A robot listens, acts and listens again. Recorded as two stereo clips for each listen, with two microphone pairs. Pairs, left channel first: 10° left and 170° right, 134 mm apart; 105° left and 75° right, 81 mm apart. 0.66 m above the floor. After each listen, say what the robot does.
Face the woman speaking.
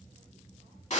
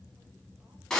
Keep listening.
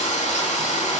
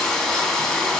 Keep listening.
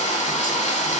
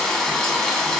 I can't make out a woman speaking, only frying.